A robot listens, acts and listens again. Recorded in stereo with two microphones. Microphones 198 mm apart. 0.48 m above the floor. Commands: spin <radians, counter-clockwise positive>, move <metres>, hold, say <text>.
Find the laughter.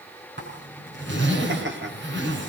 spin -1.13
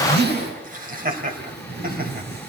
spin -0.79
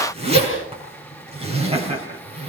spin -0.52
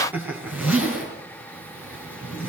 spin -0.17
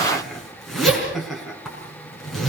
say Facing the laughter.